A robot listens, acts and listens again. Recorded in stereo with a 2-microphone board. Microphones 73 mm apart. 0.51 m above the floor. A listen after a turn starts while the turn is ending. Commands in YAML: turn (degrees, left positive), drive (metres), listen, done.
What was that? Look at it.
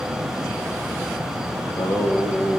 turn: 60
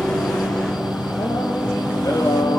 turn: 55
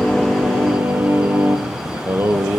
turn: -30
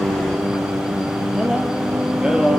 turn: -10
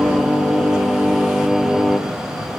done: "Found it: singing, straight ahead."